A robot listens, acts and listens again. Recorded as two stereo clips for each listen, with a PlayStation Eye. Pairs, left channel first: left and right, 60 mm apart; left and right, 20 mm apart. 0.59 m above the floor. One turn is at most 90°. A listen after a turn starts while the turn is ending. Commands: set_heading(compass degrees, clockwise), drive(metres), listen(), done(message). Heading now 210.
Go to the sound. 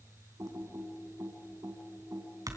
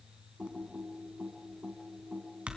set_heading(280)
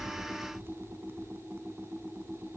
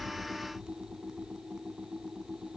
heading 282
set_heading(322)
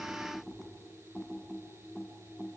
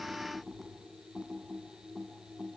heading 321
drive(1.0)
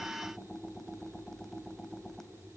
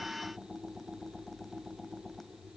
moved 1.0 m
drive(1.0)
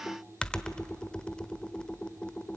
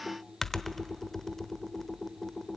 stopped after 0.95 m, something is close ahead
set_heading(306)
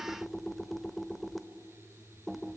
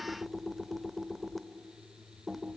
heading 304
done("Arrived at the typing on a keyboard, straight ahead.")